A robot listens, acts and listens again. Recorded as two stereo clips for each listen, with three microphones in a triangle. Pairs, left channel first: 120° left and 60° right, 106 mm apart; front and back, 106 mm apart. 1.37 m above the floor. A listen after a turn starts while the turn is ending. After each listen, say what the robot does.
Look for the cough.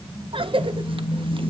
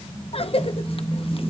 Turn 25° right.
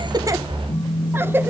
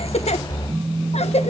Turn 10° left.
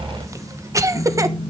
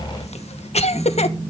Facing the cough, 1 to 2 m away.